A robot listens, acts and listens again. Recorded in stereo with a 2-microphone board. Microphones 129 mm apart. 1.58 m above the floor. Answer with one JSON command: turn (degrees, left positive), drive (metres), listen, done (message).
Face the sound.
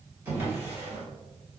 {"turn": -20}
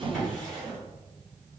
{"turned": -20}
{"done": "Facing the drawer, 1 to 2 m away."}